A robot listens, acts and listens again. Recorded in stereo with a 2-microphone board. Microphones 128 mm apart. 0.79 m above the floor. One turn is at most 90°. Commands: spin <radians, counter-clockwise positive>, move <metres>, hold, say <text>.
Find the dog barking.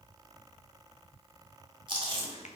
hold
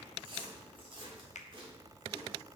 hold
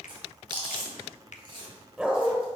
spin -0.52
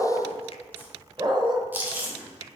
spin -1.57
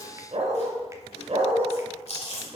spin -1.13
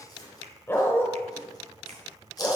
spin 0.35
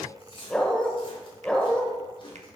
spin 0.17
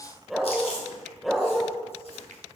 say Found it: a dog barking, straight ahead, 1 to 2 m away.